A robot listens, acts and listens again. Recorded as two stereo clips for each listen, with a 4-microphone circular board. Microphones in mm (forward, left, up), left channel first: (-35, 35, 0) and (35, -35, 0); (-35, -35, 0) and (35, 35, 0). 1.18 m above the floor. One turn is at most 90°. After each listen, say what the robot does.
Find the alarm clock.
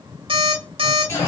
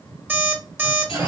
Turn 25° right.
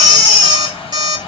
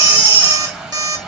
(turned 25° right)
Facing the alarm clock.